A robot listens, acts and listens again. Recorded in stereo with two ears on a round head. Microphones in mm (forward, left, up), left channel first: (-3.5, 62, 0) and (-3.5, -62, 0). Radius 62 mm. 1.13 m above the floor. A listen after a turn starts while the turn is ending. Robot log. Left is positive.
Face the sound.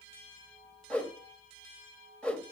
cmd yaw +30
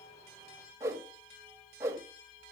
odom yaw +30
note: So it is at 25° right.
cmd yaw -25
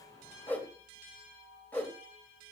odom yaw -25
note: The whoosh is now 15° left.
cmd yaw +15
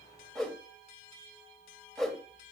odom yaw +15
end: Facing the whoosh, 1 to 2 m away.